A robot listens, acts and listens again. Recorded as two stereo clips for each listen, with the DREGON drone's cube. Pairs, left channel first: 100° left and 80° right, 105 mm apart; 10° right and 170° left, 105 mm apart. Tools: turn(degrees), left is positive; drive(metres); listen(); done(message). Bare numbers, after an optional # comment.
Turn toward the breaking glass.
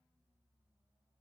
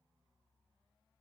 listen()
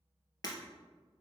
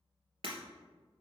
# The breaking glass: 150° left.
turn(150)
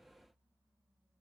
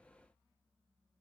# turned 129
# Nothing new. It was at 20° left.
turn(20)
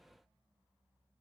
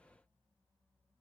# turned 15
done("I heard breaking glass from this way, but can't make it out now.")